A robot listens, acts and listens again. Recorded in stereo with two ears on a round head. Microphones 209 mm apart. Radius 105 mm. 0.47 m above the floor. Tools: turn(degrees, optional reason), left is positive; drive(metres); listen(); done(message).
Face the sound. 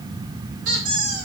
turn(degrees=-40, reason="The squeak: about 40° right or 140° right.")
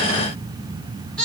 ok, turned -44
done("Found it: a squeak, straight ahead, 2 to 4 m away.")